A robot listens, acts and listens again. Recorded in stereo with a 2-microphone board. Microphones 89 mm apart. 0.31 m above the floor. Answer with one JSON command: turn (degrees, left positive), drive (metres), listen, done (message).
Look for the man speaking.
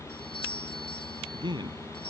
{"turn": -55}
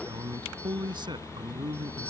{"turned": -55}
{"turn": -65}
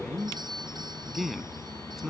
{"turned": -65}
{"done": "Found it: a man speaking, straight ahead."}